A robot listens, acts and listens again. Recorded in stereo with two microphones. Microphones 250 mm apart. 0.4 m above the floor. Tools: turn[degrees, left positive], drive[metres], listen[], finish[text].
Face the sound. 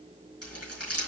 Action: turn[90]
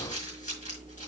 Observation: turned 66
Thought: So it is at 30° left.
Action: turn[30]
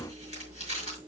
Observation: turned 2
Thought: The crumpling is now 25° left.
Action: turn[25]
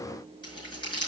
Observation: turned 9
Thought: The crumpling is now 15° left.
Action: turn[15]
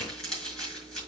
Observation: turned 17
Action: finish[Found it: crumpling, straight ahead, over 4 m away.]